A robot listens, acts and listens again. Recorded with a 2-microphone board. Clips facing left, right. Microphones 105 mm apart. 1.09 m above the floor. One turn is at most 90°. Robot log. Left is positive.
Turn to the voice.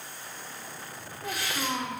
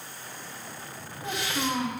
cmd yaw -30
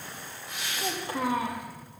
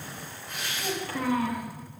note: So it is at 20° left.
cmd yaw +20
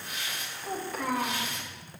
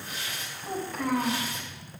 end: Facing the child speaking.